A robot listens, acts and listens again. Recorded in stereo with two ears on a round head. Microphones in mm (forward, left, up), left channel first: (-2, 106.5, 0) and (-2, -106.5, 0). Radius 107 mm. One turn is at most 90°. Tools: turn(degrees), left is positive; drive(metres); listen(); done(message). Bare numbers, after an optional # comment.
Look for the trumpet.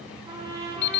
# The trumpet: about 25° right or 155° right.
turn(-25)
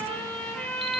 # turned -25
done("Facing the trumpet.")